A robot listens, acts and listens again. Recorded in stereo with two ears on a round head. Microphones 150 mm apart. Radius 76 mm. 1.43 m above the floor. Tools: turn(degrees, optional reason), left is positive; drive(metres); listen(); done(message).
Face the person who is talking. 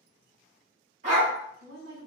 turn(degrees=-90)
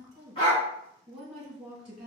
done("Facing the woman speaking, 1 to 2 m away.")